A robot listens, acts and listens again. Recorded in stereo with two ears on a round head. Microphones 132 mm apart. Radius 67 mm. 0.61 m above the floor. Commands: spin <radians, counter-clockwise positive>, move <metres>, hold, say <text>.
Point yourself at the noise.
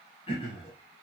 spin 0.70
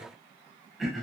say Found it: throat clearing, straight ahead, over 4 m away.